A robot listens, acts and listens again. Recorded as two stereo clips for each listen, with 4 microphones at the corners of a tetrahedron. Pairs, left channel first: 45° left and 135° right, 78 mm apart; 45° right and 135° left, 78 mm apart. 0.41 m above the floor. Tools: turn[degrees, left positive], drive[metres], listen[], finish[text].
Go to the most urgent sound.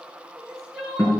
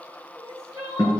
Thought: The crying: 55° right.
Action: turn[-55]
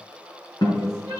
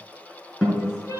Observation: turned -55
Action: drive[1.0]
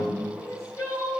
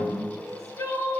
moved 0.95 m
Action: drive[1.0]
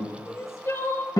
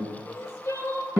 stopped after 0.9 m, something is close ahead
Action: finish[I am next to the crying.]